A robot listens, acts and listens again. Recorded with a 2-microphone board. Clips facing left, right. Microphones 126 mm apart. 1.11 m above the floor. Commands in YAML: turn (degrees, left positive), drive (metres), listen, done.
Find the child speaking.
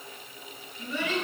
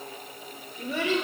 turn: -90
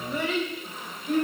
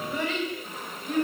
done: "Facing the child speaking, 2 to 4 m away."